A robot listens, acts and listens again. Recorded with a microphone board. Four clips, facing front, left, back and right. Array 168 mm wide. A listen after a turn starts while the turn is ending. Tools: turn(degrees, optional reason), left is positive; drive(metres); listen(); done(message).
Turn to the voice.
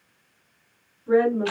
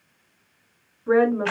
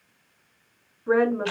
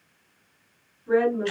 turn(degrees=135, reason="The woman speaking: 135° left.")
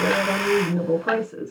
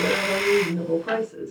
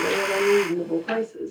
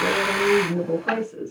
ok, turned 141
done("Found it: a woman speaking, straight ahead, over 4 m away.")